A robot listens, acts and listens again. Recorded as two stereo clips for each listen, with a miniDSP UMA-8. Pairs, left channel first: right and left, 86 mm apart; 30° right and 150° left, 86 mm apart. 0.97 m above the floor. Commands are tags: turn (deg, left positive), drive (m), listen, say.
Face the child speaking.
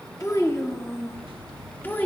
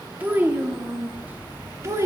<turn deg="-160"/>
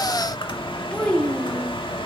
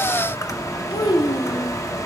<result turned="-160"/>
<turn deg="-15"/>
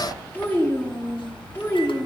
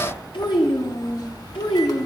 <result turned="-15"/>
<turn deg="-25"/>
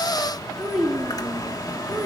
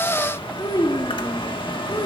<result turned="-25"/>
<say>Found it: a child speaking, straight ahead.</say>